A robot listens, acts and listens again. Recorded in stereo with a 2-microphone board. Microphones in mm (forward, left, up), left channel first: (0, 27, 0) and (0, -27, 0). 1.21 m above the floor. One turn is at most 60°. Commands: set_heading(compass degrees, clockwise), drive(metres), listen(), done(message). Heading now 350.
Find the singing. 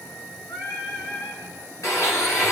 set_heading(290)
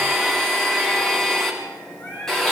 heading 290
set_heading(265)
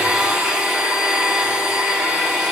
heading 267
listen()
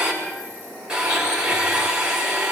listen()
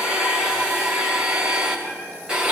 done("Facing where the singing came from. I can't hear it now.")